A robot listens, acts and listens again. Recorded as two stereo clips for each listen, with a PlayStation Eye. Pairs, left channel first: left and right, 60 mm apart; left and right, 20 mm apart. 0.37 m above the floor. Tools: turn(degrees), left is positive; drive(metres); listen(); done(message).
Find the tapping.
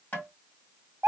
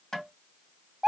turn(degrees=30)
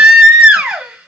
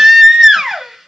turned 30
listen()
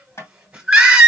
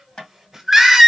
turn(degrees=115)
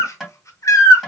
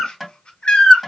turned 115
done("Found it: tapping, straight ahead, 2 to 4 m away.")